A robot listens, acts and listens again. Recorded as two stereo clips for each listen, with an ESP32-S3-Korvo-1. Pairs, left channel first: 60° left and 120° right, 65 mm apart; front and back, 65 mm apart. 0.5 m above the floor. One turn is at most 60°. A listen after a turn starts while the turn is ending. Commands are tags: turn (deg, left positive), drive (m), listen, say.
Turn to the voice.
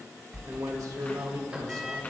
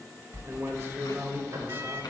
<turn deg="-60"/>
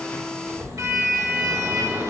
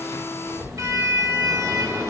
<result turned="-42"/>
<turn deg="-60"/>
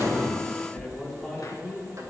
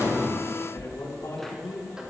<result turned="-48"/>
<turn deg="-25"/>
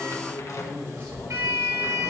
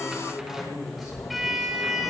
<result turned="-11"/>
<turn deg="-10"/>
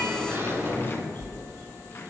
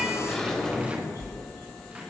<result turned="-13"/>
<listen/>
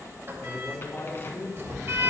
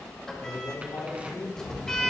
<say>Found it: a man speaking, straight ahead, over 4 m away.</say>